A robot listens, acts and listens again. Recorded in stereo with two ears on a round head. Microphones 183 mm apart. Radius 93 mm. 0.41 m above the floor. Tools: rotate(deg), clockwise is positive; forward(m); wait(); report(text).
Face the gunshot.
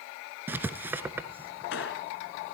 rotate(-70)
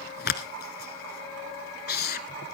wait()
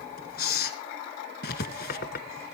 report("I heard a gunshot, but can't make it out now. It was about straight ahead or 40° left.")